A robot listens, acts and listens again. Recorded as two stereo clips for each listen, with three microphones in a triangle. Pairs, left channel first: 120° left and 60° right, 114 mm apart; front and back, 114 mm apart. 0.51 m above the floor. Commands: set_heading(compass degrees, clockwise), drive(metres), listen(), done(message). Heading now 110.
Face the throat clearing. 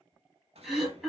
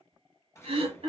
set_heading(255)
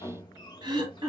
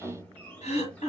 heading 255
set_heading(265)
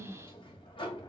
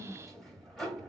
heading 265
listen()
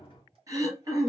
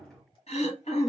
done("Found it: throat clearing, straight ahead, 1 to 2 m away.")